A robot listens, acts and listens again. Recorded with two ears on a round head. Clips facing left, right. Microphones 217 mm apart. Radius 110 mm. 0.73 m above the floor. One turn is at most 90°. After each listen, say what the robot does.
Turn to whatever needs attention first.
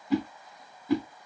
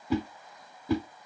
Keep listening.
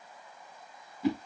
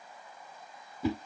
Keep listening.
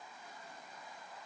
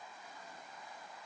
I can't make out anything urgent, only a whoosh.